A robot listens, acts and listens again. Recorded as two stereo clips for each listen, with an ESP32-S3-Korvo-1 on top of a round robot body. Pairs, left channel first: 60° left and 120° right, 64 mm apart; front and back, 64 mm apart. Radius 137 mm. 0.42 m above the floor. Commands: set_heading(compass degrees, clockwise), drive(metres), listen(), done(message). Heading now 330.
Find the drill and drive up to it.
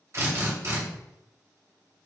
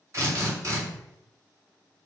set_heading(120)
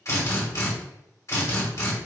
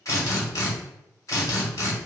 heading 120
set_heading(90)
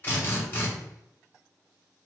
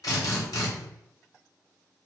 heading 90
drive(1.0)
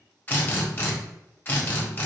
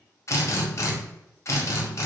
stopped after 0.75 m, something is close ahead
set_heading(75)
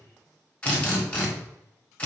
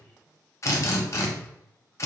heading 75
done("Arrived at the drill, straight ahead.")